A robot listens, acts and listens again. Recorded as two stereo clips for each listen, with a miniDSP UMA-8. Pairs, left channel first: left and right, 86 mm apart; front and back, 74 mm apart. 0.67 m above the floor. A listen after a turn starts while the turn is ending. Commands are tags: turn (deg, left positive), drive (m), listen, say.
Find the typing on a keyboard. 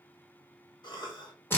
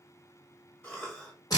<listen/>
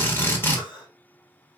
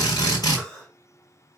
<listen/>
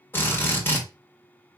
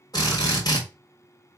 <say>I can't make out typing on a keyboard to turn to.</say>